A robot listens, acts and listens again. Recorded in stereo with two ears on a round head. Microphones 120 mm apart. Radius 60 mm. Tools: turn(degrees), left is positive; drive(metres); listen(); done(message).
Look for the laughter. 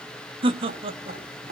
turn(degrees=-45)
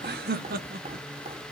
turn(degrees=-75)
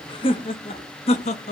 turn(degrees=55)
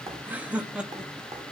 done("Facing the laughter, 1 to 2 m away.")